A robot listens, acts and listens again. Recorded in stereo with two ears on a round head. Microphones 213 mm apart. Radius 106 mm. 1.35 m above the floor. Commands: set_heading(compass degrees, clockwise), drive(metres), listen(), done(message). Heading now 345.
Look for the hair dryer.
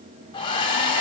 set_heading(325)
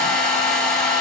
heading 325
done("Facing the hair dryer, 2 to 4 m away.")